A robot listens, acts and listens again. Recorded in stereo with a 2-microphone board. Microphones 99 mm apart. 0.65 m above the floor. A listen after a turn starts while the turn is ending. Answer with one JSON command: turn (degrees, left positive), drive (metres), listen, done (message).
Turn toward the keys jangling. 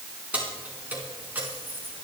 {"turn": -20}
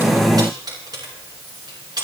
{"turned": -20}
{"turn": -135}
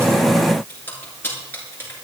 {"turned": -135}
{"turn": 25}
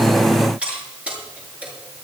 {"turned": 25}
{"turn": -15}
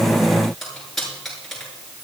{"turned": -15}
{"done": "Found it: keys jangling, straight ahead, over 4 m away."}